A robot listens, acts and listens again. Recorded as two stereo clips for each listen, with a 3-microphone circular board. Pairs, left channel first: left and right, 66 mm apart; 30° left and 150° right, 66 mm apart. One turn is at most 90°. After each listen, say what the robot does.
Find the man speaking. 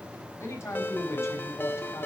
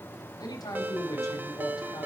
Turn 45° left.
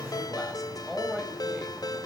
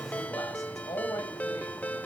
Found it: a man speaking, straight ahead.